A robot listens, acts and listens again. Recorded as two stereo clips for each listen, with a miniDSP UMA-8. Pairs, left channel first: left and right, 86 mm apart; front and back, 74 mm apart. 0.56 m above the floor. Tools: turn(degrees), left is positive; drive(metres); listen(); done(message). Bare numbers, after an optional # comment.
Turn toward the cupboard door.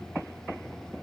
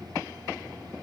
listen()
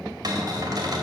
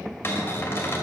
# The cupboard door: 55° right.
turn(-55)
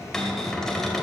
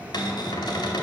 done("Found it: a cupboard door, straight ahead.")